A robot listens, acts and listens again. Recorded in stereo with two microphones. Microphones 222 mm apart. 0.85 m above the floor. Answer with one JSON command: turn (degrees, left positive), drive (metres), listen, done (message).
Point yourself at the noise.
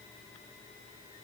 {"listen": true}
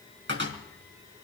{"turn": -60}
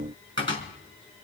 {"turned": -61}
{"turn": -60}
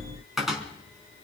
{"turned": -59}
{"done": "Facing the cupboard door."}